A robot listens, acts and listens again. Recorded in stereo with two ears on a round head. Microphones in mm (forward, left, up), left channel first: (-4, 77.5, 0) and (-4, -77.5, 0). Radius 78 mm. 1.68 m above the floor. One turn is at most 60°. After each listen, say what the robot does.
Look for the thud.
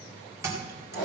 Turn 15° right.
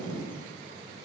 Keep listening.
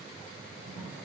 I heard a thud, but can't make it out now. It was about straight ahead or 150° right.